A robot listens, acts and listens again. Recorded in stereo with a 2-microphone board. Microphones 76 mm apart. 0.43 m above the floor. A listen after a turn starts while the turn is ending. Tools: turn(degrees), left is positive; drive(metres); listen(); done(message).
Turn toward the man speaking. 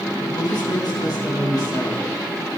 turn(degrees=55)
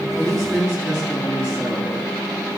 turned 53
done("Found it: a man speaking, straight ahead, over 4 m away.")